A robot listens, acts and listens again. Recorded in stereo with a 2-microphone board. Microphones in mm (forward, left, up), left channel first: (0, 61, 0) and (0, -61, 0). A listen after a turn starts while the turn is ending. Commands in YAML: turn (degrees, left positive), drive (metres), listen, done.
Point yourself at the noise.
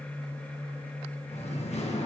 turn: 65
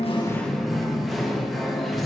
done: "Facing the singing."